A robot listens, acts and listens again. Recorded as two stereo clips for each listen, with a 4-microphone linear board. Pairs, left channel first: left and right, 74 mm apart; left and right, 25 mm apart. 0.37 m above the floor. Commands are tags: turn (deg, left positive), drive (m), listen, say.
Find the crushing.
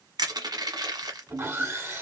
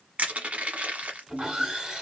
<turn deg="-70"/>
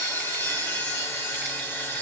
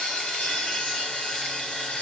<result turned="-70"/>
<listen/>
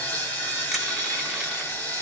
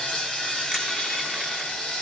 <listen/>
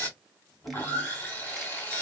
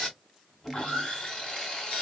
<say>I heard crushing, but can't make it out now. It was about straight ahead or 40° right.</say>